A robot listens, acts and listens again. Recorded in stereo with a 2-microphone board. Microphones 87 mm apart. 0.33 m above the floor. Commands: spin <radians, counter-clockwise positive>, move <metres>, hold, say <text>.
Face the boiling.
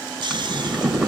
spin 0.52
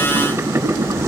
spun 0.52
spin -0.52
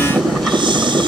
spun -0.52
say Facing the boiling.